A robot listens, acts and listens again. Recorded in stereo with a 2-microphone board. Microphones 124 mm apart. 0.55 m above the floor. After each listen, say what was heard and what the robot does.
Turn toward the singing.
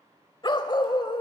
Keep listening.
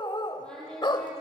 Turn 30° left.
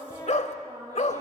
So it is at 30° right. Turn 30° right.
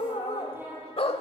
The singing is now 20° right. Turn 20° right.
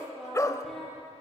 Facing the singing.